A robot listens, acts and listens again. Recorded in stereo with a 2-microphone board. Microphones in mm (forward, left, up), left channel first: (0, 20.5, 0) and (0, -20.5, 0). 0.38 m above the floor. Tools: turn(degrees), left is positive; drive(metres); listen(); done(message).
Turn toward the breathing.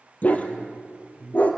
turn(degrees=-45)
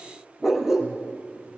listen()
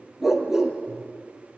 listen()
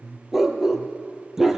turn(degrees=-85)
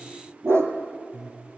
turn(degrees=-10)
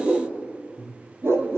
done("Facing the breathing.")